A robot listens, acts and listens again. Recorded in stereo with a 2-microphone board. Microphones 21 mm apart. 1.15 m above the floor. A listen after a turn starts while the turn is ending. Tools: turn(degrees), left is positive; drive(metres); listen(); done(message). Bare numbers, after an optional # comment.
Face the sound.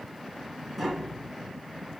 turn(30)
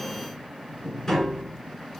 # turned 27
# So it is at 155° left.
turn(155)
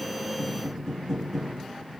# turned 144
# The tapping is now 10° left.
turn(10)
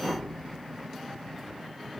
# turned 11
done("Facing the tapping.")